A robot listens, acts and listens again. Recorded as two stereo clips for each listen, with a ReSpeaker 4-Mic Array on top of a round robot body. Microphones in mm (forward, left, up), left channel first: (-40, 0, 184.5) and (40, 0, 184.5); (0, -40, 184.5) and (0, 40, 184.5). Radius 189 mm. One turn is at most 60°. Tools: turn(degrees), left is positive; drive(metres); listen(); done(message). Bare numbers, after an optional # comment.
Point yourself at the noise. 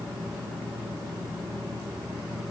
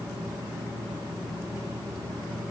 listen()
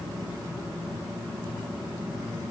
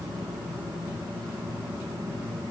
listen()
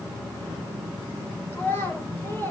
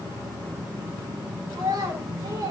# The child speaking: 120° left.
turn(60)
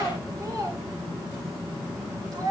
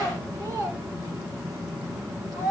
# The child speaking is now 45° left.
turn(45)
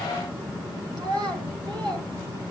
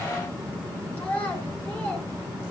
# The child speaking is now 20° right.
turn(-20)
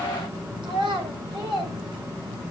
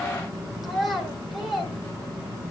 done("Found it: a child speaking, straight ahead, over 4 m away.")